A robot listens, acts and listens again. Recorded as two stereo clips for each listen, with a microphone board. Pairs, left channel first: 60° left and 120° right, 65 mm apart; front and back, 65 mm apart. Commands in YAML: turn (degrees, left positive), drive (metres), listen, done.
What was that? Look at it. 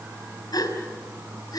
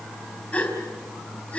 turn: 70
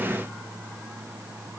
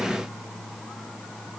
done: "I heard a gasp from this way, but can't make it out now."